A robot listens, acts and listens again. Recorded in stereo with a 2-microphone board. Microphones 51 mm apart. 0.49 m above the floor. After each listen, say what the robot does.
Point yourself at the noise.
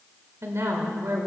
Turn 60° right.
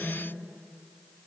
Keep listening.
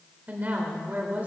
Turn 40° right.
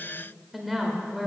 Found it: a woman speaking, straight ahead.